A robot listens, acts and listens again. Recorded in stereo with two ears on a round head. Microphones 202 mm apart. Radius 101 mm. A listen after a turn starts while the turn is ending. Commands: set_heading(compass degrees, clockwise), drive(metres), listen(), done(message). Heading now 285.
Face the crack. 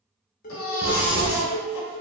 set_heading(305)
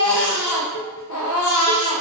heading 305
listen()
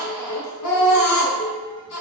done("I heard a crack, but can't make it out now. It was about straight ahead or 140° right.")